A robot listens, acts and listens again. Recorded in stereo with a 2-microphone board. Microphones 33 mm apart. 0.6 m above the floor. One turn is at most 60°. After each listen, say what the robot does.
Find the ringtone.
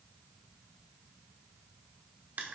Keep listening.
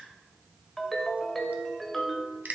Turn 30° left.
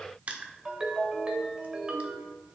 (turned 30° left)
Turn 25° right.
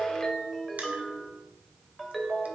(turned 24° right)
Facing the ringtone.